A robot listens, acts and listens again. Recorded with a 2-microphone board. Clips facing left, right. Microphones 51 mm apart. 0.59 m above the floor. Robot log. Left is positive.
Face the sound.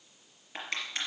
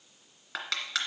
cmd yaw -90
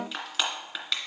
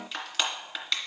end: Facing the crushing, 2 to 4 m away.